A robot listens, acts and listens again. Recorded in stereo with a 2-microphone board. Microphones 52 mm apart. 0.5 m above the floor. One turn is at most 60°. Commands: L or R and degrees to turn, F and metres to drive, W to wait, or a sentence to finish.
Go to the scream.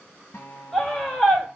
L30
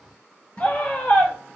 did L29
L60
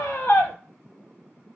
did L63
L60
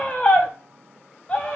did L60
L30
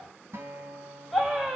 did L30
F1.0
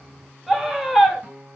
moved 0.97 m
F1.0
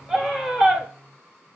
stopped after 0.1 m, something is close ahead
R10
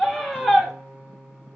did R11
Arrived at the scream, straight ahead.